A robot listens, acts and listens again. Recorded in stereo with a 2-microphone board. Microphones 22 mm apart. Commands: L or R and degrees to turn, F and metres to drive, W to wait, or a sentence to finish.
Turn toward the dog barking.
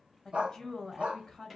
R90
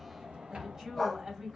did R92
Facing the dog barking, 1 to 2 m away.